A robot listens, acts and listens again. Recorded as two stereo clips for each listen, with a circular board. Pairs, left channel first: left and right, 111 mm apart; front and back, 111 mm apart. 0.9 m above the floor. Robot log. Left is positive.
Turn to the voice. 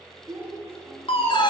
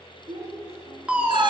note: The child speaking: 160° right.
cmd yaw -160
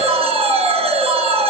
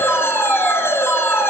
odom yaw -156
cmd idle
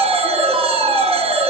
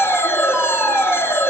cmd idle
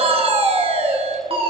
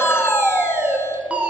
end: Facing where the child speaking came from. I can't hear it now.